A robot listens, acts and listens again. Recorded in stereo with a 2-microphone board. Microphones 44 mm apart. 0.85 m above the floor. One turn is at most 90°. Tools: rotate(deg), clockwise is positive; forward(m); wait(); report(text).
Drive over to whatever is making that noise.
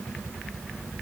wait()
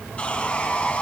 rotate(-30)
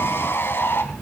rotate(-90)
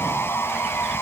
rotate(-55)
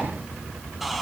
forward(1.0)
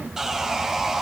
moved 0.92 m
rotate(10)
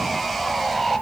forward(1.0)
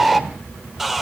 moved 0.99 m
forward(1.0)
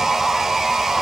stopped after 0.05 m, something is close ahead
rotate(10)
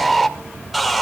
report("I am next to the sawing.")